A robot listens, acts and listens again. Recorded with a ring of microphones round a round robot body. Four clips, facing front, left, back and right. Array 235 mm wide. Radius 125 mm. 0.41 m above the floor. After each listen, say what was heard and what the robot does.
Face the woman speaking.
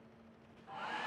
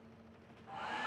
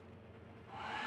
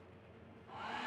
Keep listening.
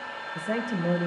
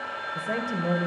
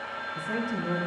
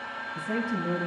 The woman speaking: 40° left. Turn 40° left.
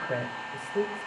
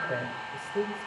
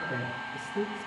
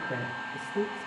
The woman speaking is now 25° left. Turn 25° left.
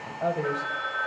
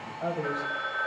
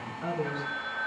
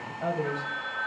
Found it: a woman speaking, straight ahead, 2 to 4 m away.